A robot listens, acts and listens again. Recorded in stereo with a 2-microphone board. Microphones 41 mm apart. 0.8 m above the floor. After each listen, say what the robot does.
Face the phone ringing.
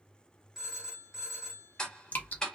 Turn 30° right.
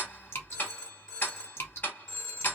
Turn 15° left.
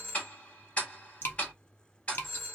Facing the phone ringing.